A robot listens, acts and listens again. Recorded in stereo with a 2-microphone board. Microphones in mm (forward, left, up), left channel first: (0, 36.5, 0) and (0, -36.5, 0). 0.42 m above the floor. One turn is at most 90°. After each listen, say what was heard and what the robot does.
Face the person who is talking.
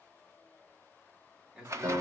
Turn 30° right.
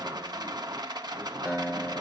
Keep listening.
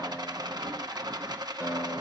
Keep listening.
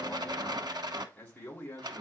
So it is at 20° left. Turn 20° left.
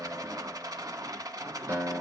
Keep listening.
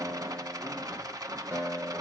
Keep listening.
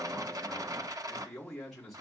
Facing the man speaking.